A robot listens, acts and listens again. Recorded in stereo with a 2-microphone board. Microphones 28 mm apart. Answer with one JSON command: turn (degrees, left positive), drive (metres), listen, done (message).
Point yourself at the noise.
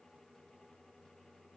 {"listen": true}
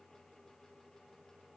{"listen": true}
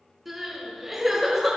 {"turn": -30}
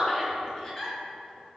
{"turn": 25}
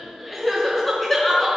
{"done": "Found it: crying, straight ahead."}